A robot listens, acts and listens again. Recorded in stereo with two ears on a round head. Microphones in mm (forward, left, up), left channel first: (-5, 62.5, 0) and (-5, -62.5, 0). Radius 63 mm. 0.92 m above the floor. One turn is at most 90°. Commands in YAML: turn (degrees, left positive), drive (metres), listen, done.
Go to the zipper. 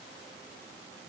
listen: true
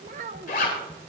turn: 65
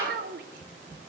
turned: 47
listen: true
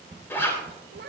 turn: 15
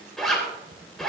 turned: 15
drive: 1.0
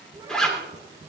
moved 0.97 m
drive: 1.0
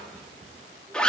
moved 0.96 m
turn: 10
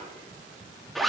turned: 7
drive: 1.0
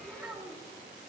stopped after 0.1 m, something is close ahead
listen: true
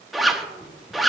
done: "Arrived at the zipper, straight ahead."